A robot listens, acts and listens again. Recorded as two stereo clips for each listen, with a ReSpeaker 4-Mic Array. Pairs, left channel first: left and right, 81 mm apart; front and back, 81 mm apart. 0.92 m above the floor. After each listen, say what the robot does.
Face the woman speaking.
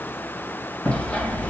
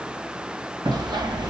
Keep listening.
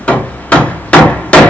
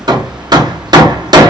Keep listening.
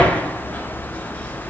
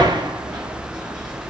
I can't make out a woman speaking to turn to.